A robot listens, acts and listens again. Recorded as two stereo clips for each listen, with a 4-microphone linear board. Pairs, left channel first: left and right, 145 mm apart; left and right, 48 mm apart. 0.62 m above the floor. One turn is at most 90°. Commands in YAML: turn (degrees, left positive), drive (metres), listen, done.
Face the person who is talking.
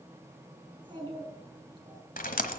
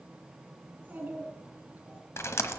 turn: -35
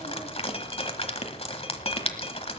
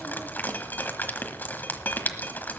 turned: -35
listen: true
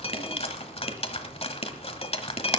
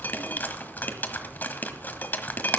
listen: true
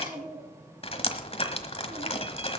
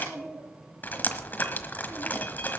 turn: -90
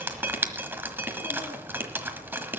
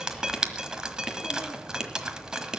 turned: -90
turn: -25
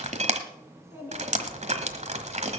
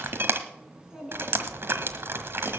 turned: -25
turn: -20
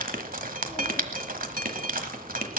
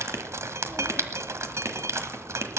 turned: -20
listen: true
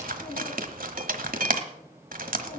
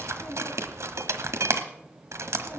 listen: true
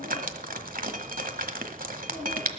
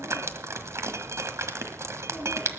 done: "Facing where the child speaking came from. I can't hear it now."